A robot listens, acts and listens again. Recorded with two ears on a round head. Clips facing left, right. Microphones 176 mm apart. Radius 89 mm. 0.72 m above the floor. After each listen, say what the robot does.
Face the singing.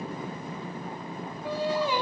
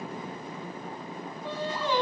Turn 30° left.
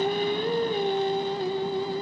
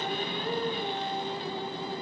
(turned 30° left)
Turn 140° left.
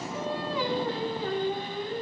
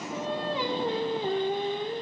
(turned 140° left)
Turn 20° right.
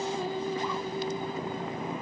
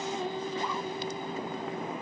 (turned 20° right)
Facing the singing.